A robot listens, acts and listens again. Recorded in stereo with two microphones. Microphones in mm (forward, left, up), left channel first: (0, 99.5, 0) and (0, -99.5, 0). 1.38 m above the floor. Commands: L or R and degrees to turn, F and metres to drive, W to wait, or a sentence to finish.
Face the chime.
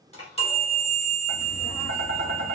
L30
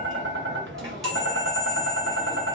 Facing the chime.